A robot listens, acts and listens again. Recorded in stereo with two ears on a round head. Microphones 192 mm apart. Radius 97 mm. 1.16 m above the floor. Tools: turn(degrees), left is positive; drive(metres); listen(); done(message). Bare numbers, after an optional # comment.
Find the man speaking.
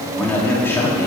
turn(30)
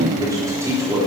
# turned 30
# So it is at 15° right.
turn(-15)
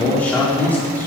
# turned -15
# The man speaking is now 10° left.
turn(10)
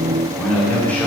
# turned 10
# The man speaking is now 10° left.
turn(10)
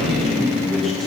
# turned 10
done("Found it: a man speaking, straight ahead, over 4 m away.")